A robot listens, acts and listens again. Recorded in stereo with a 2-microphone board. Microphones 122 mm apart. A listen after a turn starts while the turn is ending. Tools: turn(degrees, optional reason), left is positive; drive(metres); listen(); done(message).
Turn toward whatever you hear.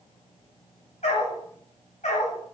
turn(degrees=75, reason="The dog barking: about 75° left or 105° left.")
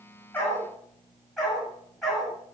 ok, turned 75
done("Facing the dog barking, over 4 m away.")